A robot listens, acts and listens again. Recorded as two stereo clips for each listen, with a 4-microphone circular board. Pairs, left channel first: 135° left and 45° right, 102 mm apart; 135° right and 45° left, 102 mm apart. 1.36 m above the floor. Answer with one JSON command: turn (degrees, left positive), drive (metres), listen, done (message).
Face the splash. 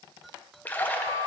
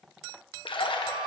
{"turn": -155}
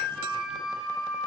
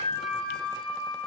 {"done": "Facing where the splash came from. I can't hear it now."}